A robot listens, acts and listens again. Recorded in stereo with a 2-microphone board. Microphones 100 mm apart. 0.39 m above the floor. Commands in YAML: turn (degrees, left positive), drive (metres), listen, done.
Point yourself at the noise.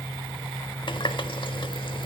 turn: 55
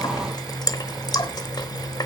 turn: 50
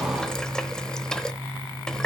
turn: 10
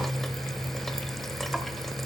listen: true
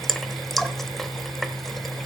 done: "Facing the running tap."